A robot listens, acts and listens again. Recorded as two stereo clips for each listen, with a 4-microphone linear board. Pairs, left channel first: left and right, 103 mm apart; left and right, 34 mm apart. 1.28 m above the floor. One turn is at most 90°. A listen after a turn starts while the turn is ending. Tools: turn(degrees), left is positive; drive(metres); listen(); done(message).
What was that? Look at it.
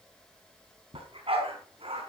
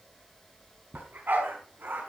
turn(degrees=-65)
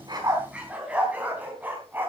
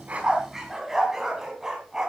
turn(degrees=-20)
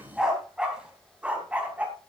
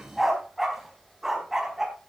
turn(degrees=-15)
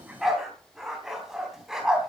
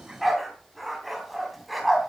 done("Facing the dog barking.")